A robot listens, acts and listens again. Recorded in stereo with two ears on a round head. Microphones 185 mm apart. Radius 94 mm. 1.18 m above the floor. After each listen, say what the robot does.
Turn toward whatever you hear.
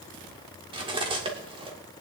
Turn 25° right.
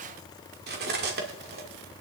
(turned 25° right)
Turn 125° right.
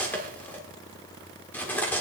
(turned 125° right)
Turn 10° left.
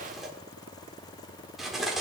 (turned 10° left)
Facing the cutlery clinking.